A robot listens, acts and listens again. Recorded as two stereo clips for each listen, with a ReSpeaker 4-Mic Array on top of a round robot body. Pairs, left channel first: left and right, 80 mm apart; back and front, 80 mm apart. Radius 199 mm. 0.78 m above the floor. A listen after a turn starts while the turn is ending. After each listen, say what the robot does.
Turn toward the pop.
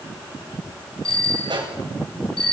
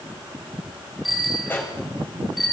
Turn 115° right.
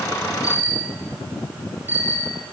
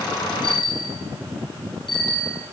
I heard a pop from this way, but can't make it out now.